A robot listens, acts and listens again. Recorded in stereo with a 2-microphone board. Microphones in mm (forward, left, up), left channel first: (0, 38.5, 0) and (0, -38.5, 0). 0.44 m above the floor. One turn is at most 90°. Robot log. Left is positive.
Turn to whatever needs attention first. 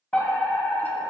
note: The fire alarm: about 15° left or 165° left.
cmd yaw +15
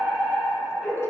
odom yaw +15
end: Facing the fire alarm, over 4 m away.